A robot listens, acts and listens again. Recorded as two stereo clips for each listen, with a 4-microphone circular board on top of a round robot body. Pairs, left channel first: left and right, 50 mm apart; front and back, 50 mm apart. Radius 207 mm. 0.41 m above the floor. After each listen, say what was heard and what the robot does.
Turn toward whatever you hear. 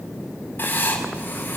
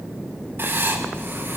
The writing: 140° left. Turn 140° left.
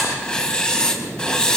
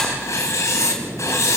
The writing is now 20° left. Turn 20° left.
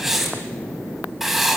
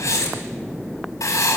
Found it: writing, straight ahead.